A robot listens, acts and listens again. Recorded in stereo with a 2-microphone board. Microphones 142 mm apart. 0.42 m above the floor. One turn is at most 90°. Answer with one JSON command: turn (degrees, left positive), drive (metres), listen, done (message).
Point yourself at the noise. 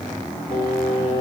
{"turn": 70}
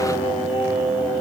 {"turn": 35}
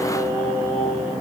{"turn": 25}
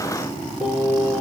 {"done": "Found it: singing, straight ahead."}